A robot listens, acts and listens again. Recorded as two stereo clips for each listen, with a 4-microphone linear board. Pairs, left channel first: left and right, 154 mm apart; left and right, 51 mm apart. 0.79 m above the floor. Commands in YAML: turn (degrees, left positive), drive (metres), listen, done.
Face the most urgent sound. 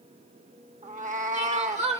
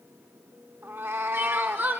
turn: -45
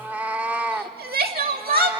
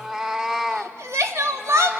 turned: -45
turn: -90
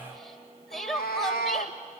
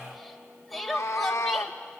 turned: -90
done: "Facing the crying, 1 to 2 m away."